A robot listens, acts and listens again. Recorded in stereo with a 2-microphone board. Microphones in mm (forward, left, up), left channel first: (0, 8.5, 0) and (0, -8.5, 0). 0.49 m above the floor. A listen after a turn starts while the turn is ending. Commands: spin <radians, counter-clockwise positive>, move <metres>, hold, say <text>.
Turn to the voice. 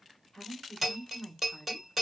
spin 0.70
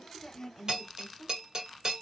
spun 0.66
spin 0.26
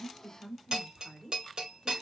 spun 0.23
say Found it: a woman speaking, straight ahead.